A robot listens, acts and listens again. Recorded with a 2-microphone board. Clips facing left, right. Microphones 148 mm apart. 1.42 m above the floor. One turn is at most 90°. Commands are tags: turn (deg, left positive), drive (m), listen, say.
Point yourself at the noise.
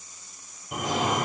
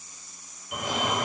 <turn deg="35"/>
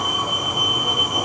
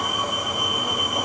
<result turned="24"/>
<turn deg="20"/>
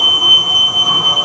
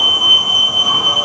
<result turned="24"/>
<say>Found it: a fire alarm, straight ahead.</say>